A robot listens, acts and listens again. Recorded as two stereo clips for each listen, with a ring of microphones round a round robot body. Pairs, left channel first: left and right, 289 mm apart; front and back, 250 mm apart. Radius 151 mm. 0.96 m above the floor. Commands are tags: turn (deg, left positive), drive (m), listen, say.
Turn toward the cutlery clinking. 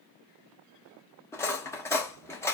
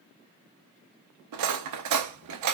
<turn deg="170"/>
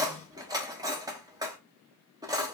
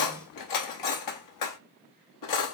<turn deg="-10"/>
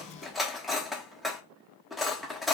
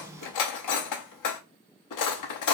<say>Found it: cutlery clinking, straight ahead.</say>